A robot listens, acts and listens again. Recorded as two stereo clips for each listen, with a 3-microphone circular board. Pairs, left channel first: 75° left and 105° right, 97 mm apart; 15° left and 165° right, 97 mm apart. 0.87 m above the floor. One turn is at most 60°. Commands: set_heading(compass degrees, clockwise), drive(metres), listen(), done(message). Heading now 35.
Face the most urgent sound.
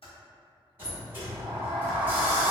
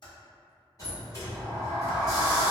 listen()
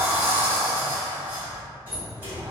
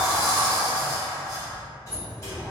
listen()
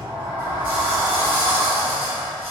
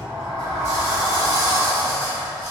done("I can't make out anything urgent to turn to.")